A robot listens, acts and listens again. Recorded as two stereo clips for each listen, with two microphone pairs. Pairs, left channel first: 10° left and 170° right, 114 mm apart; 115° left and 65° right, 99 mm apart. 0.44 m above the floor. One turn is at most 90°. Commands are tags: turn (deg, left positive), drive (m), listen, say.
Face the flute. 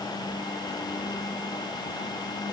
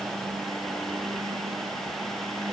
<listen/>
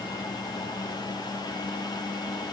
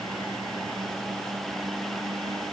<listen/>
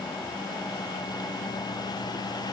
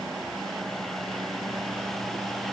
<say>I can't make out a flute.</say>